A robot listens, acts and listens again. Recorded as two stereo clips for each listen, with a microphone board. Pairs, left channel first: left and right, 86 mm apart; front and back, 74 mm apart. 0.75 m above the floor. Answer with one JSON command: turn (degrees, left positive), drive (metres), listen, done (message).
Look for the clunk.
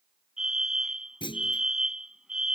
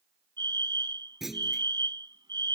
{"turn": 95}
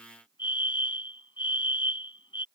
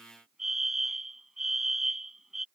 {"done": "Facing where the clunk came from. I can't hear it now."}